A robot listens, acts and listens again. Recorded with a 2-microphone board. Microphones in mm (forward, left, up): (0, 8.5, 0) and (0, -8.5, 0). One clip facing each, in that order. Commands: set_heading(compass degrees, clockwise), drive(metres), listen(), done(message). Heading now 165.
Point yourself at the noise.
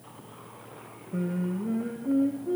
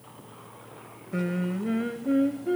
set_heading(235)
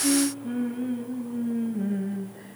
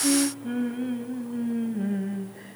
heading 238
set_heading(253)
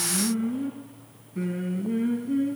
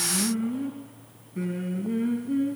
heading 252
done("Found it: singing, straight ahead.")